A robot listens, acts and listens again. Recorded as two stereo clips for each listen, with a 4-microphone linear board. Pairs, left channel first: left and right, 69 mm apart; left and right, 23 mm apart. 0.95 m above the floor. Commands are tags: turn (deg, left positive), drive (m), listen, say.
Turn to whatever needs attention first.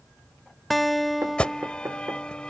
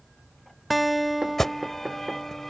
<turn deg="30"/>
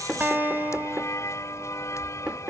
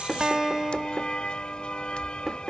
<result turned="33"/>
<turn deg="135"/>
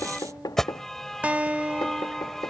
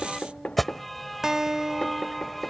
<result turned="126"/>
<say>Facing the alarm.</say>